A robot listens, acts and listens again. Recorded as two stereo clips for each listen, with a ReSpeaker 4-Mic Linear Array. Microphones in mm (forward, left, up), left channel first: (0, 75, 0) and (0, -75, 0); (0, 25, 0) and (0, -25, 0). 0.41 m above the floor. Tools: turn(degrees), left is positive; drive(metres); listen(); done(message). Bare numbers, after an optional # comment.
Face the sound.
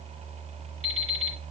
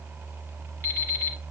# The alarm clock: about 45° left or 135° left.
turn(45)
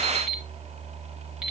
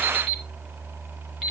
done("Found it: an alarm clock, straight ahead, 2 to 4 m away.")